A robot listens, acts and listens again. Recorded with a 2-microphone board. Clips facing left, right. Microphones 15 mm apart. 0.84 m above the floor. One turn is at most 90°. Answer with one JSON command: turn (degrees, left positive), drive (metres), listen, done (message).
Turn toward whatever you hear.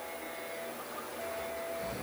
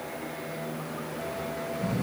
{"turn": -30}
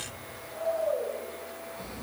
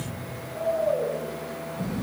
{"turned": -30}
{"turn": 25}
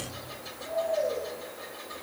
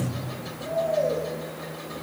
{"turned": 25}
{"done": "Found it: snoring, straight ahead."}